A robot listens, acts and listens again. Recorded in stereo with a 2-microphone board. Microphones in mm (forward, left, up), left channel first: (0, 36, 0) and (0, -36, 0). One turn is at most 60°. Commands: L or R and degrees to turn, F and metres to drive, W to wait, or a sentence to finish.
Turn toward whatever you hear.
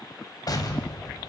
L55
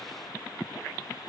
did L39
W
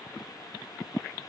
I heard an explosion, but can't make it out now. It was about 15° left or 85° left.